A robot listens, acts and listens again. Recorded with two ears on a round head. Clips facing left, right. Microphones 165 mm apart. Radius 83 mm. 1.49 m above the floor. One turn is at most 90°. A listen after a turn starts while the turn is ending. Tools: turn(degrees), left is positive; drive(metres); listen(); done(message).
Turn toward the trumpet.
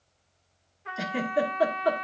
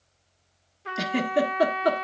turn(degrees=-50)
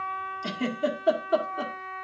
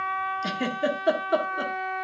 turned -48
turn(degrees=-85)
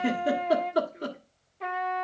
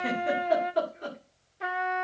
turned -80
done("Found it: a trumpet, straight ahead, 1 to 2 m away.")